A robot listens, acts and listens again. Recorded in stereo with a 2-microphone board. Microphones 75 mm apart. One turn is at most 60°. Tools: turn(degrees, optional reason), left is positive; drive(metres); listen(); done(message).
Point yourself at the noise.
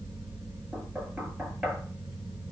turn(degrees=-15, reason="The knocking: about 15° right or 165° right.")
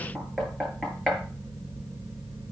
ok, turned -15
done("Facing the knocking, over 4 m away.")